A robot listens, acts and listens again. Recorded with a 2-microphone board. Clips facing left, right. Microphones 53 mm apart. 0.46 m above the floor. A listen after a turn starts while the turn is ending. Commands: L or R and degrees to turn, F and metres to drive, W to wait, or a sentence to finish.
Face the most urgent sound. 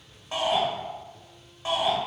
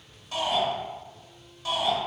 L30
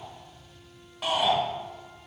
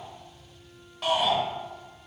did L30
Found it: a shout, straight ahead, 1 to 2 m away.